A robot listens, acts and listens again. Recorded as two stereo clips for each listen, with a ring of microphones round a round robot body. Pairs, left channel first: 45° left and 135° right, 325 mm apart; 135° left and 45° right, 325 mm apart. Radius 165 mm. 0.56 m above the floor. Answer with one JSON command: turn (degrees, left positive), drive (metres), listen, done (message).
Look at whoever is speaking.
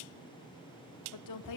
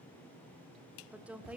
{"turn": 40}
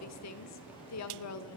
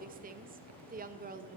{"turn": 15}
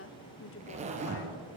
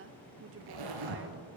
{"done": "Facing the woman speaking."}